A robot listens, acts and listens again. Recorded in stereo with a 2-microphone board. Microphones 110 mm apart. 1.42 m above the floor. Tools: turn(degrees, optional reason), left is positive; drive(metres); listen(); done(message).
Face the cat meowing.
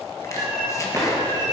turn(degrees=-40, reason="The cat meowing: about 40° right or 140° right.")
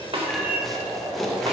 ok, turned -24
turn(degrees=-15, reason="So it is at 15° right.")
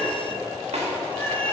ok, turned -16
turn(degrees=15, reason="The cat meowing is now 15° left.")
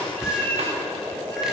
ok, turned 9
turn(degrees=30, reason="The cat meowing is now 30° left.")
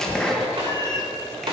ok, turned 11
turn(degrees=35, reason="The cat meowing is now 35° left.")
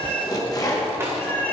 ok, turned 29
turn(degrees=20, reason="The cat meowing is now 20° left.")
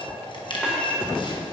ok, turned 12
turn(degrees=10, reason="The cat meowing is now 10° left.")
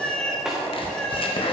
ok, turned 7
done("Found it: a cat meowing, straight ahead.")